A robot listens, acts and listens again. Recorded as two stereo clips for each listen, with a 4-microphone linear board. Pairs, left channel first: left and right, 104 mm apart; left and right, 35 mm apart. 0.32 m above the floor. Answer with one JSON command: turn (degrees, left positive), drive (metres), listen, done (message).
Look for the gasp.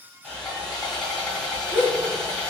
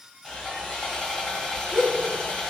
{"turn": -30}
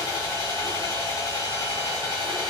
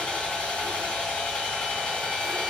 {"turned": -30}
{"listen": true}
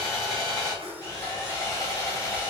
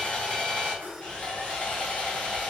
{"done": "I heard a gasp, but can't make it out now. It was about 20° left or 140° right."}